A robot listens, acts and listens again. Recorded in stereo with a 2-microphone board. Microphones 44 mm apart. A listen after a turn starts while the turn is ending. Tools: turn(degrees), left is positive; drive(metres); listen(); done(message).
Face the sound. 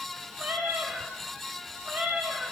turn(degrees=-40)
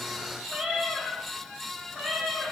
turn(degrees=-10)
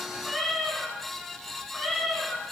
done("Facing the cat meowing, over 4 m away.")